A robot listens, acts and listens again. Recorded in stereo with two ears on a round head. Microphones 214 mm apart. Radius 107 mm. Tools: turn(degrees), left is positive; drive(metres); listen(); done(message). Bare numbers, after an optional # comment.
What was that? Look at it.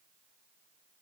listen()
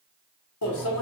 # The microwave: about 70° left or 110° left.
turn(70)
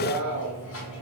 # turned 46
# So it is at 65° left.
turn(65)
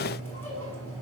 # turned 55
# The microwave is now 10° left.
turn(10)
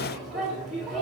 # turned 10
done("Found it: a microwave, straight ahead, 1 to 2 m away.")